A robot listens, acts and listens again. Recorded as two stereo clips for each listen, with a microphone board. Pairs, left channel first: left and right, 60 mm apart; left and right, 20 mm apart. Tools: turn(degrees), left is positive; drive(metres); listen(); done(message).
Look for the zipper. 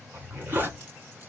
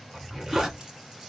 turn(degrees=-35)
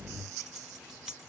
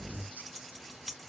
listen()
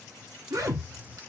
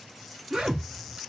turn(degrees=-110)
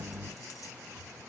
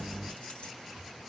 listen()
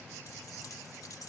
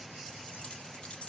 listen()
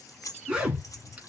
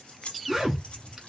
turn(degrees=-20)
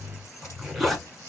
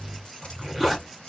done("Facing the zipper.")